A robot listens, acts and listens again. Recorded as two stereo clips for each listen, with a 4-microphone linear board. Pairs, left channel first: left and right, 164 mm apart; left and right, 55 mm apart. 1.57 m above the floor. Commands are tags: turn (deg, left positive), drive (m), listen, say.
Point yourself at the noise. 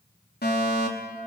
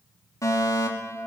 <turn deg="90"/>
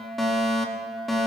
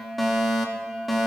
<say>Found it: a fire alarm, straight ahead, over 4 m away.</say>